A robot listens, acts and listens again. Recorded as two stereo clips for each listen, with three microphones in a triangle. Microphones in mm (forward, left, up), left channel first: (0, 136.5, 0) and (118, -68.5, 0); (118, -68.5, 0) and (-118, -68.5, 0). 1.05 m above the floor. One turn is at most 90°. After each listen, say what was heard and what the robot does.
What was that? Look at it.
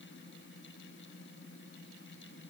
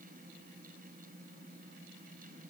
Keep listening.
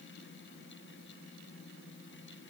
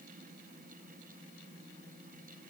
Keep listening.
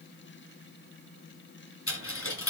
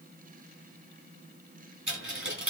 The dropped coin: 145° left. Turn 90° left.
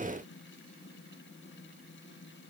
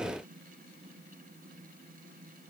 Nothing new. It was at 55° left. Turn 55° left.
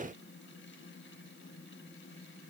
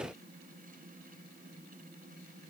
I heard a dropped coin from this way, but can't make it out now.